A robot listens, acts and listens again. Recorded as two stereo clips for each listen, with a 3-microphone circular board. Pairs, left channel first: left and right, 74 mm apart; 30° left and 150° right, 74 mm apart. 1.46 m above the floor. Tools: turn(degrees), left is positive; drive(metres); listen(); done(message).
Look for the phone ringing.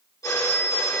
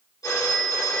turn(degrees=55)
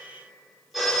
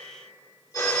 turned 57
done("Facing the phone ringing.")